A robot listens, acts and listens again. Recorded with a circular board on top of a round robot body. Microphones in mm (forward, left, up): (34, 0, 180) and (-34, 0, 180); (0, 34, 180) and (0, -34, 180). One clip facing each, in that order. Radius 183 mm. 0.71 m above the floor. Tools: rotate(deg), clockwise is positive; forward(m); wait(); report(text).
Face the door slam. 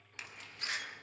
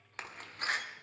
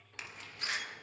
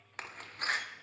rotate(135)
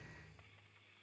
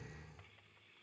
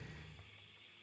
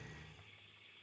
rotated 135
report("Facing where the door slam came from. I can't hear it now.")